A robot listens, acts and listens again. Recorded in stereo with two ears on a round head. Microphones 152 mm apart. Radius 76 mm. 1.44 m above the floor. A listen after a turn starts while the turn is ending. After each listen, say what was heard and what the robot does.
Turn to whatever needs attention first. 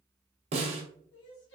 Turn 90° left.
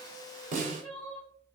Found it: crying, straight ahead, under 1 m away.